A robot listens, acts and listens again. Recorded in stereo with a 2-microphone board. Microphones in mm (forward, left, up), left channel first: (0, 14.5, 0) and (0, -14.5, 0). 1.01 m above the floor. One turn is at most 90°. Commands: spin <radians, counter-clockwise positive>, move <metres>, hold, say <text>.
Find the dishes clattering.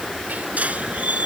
hold
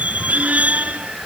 hold
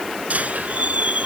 say I can't make out dishes clattering, only a squeak.